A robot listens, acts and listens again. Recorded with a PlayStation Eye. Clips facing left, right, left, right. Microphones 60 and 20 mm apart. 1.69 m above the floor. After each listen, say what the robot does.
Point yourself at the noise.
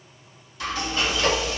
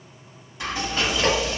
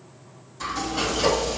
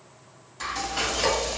Turn 20° right.
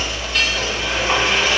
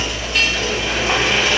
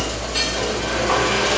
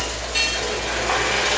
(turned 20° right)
Turn 10° right.
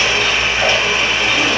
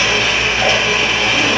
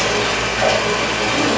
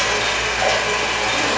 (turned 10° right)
Found it: frying, straight ahead, 1 to 2 m away.